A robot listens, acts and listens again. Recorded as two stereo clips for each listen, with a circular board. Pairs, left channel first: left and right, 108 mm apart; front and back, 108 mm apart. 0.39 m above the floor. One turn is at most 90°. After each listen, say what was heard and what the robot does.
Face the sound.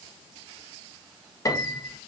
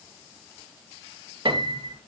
The piano: 145° left. Turn 90° left.
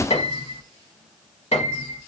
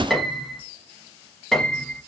The piano is now 85° left. Turn 85° left.
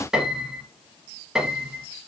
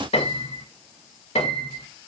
Found it: a piano, straight ahead.